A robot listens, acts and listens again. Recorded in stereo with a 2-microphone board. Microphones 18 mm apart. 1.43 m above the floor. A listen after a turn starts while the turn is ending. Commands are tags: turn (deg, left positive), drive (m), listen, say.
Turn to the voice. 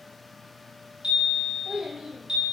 <turn deg="-70"/>
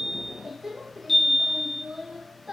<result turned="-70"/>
<turn deg="-25"/>
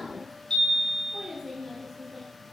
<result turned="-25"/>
<say>Facing the child speaking, 1 to 2 m away.</say>